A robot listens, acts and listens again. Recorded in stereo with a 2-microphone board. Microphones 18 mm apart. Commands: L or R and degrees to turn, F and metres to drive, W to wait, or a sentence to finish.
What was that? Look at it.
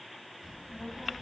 R20
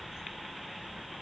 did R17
R135
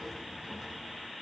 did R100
R25
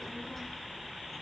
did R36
L15
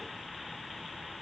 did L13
Facing the child speaking, over 4 m away.